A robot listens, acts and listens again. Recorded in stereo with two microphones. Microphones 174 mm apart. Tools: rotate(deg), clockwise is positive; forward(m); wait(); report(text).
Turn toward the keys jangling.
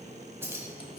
rotate(30)
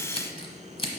wait()
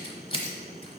wait()
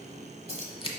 rotate(135)
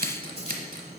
wait()
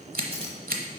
wait()
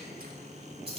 rotate(40)
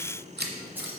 wait()
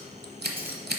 wait()
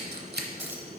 report("Facing where the keys jangling came from. I can't hear it now.")